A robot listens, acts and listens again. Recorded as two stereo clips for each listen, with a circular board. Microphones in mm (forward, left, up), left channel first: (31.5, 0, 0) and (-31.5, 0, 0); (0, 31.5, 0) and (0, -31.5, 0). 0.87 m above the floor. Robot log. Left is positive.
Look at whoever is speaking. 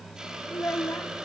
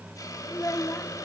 note: The child speaking: 55° left.
cmd yaw +55
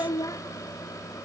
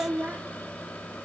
note: The child speaking is now 25° right.
cmd yaw -25
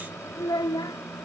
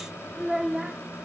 end: Facing the child speaking.